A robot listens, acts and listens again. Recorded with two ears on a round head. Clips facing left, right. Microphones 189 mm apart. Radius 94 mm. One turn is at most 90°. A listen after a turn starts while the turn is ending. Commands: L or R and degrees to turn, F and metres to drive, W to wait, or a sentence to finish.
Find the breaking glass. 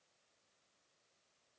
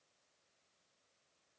W
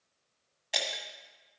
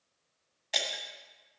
L30
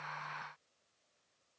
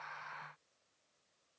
W
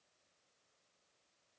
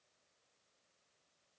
I heard breaking glass, but can't make it out now. It was about 30° right or 150° left.